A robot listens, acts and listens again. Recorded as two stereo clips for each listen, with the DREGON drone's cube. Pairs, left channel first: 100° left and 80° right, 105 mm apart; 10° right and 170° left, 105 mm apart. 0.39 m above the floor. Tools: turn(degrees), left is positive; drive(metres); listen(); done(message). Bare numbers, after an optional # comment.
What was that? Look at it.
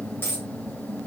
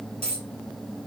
# The dropped coin: 170° left.
turn(170)
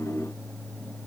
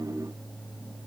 done("I heard a dropped coin from this way, but can't make it out now.")